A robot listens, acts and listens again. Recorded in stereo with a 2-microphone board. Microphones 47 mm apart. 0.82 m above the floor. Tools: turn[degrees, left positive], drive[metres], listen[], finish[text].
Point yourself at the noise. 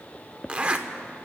Thought: The zipper: about 25° right or 155° right.
Action: turn[-25]
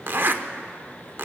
Thought: So it is at 130° right.
Action: turn[-130]
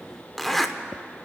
Action: finish[Facing the zipper.]